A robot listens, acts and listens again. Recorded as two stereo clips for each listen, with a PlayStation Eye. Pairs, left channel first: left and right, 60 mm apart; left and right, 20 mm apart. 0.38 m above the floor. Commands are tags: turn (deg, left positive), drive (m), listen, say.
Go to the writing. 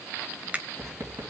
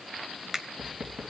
<turn deg="-60"/>
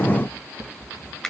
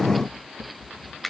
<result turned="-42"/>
<turn deg="-70"/>
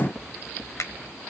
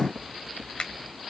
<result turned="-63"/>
<drive m="1.0"/>
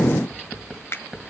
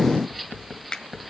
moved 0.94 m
<turn deg="-10"/>
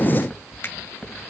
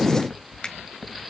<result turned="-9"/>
<drive m="1.0"/>
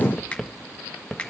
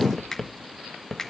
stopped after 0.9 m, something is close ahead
<say>Arrived at the writing, straight ahead.</say>